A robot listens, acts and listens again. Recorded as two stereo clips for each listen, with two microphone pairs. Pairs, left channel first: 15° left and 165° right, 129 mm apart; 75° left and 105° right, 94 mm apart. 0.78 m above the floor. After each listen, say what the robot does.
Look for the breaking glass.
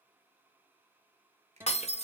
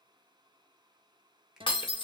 Turn 55° left.
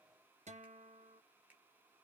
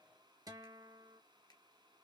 Facing where the breaking glass came from. I can't hear it now.